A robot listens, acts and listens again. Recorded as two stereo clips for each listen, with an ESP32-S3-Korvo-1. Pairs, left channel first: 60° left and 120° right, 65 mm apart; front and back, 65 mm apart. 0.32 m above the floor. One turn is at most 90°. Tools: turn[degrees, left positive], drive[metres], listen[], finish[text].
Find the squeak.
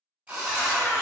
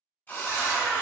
Thought: The squeak: 145° left.
Action: turn[90]
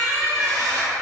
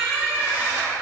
Thought: The squeak is now 70° left.
Action: turn[70]
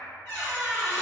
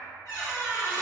Thought: The squeak is now 20° left.
Action: turn[20]
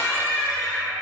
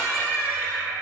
Action: finish[Facing the squeak, 1 to 2 m away.]